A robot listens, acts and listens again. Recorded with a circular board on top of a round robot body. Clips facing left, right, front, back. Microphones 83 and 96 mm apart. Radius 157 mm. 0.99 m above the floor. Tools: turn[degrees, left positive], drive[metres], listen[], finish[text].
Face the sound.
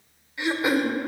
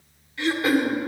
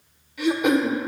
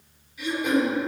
Thought: The throat clearing: 15° left.
Action: turn[15]
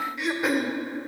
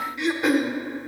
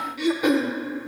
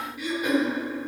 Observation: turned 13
Action: finish[Found it: throat clearing, straight ahead, under 1 m away.]